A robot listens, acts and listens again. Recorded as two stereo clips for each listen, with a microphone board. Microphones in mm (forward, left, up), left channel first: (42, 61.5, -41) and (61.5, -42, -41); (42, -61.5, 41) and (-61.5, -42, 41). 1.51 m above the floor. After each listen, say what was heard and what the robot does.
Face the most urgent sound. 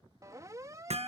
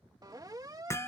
The siren: 135° right. Turn 135° right.
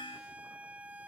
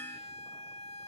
Found it: a siren, straight ahead.